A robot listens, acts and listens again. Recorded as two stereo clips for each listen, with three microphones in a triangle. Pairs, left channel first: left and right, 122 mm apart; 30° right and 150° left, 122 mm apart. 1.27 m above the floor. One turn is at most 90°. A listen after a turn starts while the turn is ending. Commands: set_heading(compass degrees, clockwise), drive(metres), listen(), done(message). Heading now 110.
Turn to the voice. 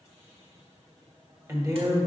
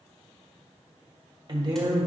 set_heading(200)
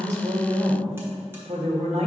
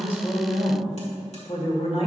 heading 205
set_heading(265)
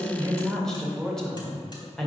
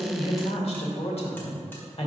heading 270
done("Found it: a woman speaking, straight ahead.")